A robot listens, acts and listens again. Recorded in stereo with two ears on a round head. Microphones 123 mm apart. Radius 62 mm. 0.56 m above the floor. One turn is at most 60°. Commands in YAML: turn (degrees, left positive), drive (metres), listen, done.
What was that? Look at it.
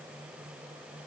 listen: true
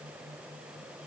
listen: true
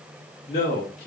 turn: 50
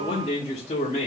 turn: 50
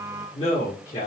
turn: 50
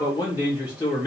turn: 30
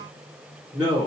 done: "Facing the man speaking, 1 to 2 m away."